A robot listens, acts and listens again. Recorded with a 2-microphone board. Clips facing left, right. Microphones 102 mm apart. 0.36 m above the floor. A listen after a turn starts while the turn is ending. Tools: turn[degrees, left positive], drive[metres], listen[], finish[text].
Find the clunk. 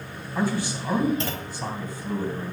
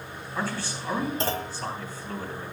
Thought: The clunk: about 35° right or 145° right.
Action: turn[-35]
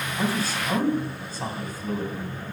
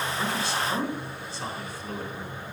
Action: listen[]
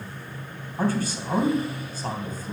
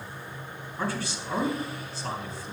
Action: finish[I heard a clunk, but can't make it out now. It was about straight ahead or 110° right.]